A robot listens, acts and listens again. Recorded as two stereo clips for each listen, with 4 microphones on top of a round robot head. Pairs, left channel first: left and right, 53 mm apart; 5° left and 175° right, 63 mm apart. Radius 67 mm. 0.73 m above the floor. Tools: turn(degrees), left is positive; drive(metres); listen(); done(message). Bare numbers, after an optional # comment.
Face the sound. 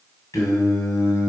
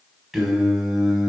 # The singing: 95° left.
turn(95)
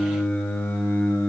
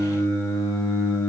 # The singing is now 45° left.
turn(45)
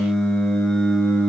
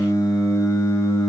# The singing is now 15° left.
turn(15)
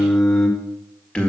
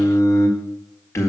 # The singing is now 25° left.
turn(25)
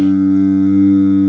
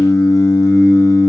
# The singing is now 10° left.
turn(10)
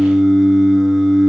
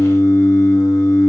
done("Facing the singing, 1 to 2 m away.")